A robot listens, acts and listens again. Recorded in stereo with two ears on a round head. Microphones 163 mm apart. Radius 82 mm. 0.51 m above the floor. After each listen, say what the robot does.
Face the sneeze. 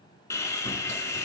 Keep listening.
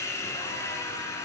Keep listening.
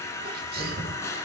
Turn 55° right.
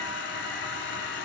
Keep listening.
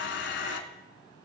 I heard a sneeze, but can't make it out now. It was about straight ahead or 70° right.